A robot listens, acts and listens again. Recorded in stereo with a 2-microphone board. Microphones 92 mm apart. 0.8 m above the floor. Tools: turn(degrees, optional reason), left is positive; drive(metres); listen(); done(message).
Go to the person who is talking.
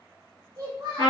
turn(degrees=-40, reason="The child speaking: about 40° right or 140° right.")
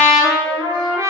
listen()
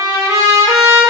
listen()
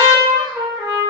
done("I heard a child speaking, but can't make it out now. It was about straight ahead or 100° right. I did not reach it.")